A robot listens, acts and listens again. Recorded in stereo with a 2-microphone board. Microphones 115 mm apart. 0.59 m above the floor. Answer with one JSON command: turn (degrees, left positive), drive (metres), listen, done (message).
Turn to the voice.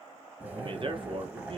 {"turn": -50}
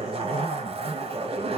{"listen": true}
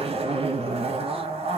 {"listen": true}
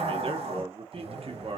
{"turn": -70}
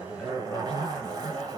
{"listen": true}
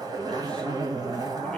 {"listen": true}
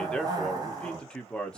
{"turn": 10}
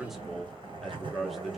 {"done": "Found it: a man speaking, straight ahead."}